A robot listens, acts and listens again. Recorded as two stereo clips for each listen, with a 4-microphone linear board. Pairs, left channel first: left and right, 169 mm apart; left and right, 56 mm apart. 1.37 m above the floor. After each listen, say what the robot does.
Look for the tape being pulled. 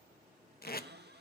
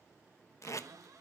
Turn 65° left.
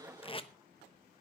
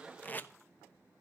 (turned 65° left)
Turn 35° left.
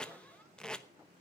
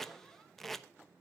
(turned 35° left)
Found it: tape being pulled, straight ahead, under 1 m away.